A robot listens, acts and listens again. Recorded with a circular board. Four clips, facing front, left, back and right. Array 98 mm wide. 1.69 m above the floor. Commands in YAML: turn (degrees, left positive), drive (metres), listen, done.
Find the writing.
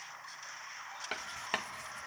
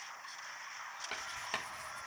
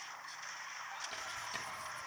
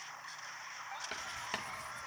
done: "Found it: writing, straight ahead, 1 to 2 m away."